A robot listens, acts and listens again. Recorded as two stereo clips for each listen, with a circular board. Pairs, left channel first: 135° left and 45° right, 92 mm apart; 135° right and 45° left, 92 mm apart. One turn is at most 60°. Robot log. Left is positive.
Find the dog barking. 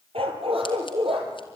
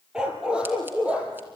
note: The dog barking: 30° right.
cmd yaw -30
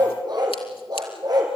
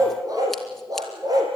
end: Facing the dog barking, 2 to 4 m away.